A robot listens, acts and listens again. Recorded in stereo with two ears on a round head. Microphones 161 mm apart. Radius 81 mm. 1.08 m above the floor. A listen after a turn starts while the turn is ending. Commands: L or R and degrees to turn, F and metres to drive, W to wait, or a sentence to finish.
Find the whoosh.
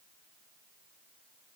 W
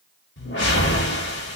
L75
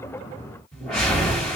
Facing the whoosh.